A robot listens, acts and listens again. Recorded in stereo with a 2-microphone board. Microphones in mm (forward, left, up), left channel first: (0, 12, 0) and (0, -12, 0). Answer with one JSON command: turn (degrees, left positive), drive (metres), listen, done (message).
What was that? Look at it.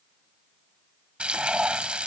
{"turn": -60}
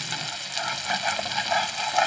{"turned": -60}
{"done": "Found it: frying, straight ahead."}